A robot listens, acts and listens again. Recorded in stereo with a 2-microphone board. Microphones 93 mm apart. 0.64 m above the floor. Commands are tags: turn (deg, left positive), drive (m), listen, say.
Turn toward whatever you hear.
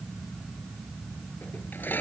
<turn deg="20"/>
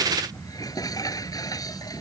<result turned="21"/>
<turn deg="140"/>
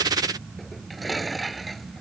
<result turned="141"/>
<say>Facing the dishes clattering.</say>